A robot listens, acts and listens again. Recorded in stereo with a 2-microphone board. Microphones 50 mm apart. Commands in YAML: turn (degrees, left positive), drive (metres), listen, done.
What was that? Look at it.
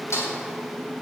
turn: 70
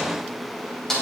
turn: 10
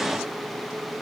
listen: true
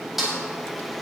done: "Found it: a snare drum, straight ahead."